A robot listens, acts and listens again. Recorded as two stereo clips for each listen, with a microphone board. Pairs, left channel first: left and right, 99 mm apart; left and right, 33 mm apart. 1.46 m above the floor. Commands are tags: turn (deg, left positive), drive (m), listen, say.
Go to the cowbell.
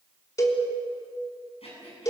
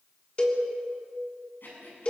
<turn deg="35"/>
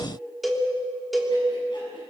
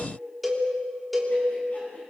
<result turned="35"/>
<drive m="1.0"/>
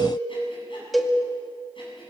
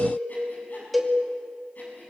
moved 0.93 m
<drive m="1.0"/>
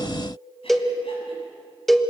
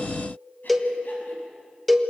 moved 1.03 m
<drive m="1.0"/>
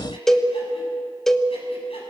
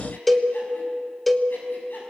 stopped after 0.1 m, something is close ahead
<say>Arrived at the cowbell, straight ahead.</say>